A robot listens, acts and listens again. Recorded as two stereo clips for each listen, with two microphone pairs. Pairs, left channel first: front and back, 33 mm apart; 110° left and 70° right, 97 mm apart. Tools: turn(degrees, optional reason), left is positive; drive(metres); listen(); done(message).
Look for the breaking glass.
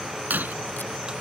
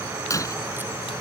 turn(degrees=165, reason="The breaking glass: 165° left.")
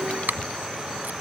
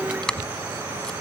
done("Facing where the breaking glass came from. I can't hear it now.")